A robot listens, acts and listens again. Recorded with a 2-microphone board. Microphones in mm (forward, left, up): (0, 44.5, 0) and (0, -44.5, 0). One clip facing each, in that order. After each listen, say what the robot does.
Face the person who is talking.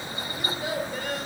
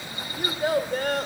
Turn 50° right.
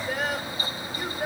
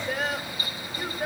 Found it: a child speaking, straight ahead.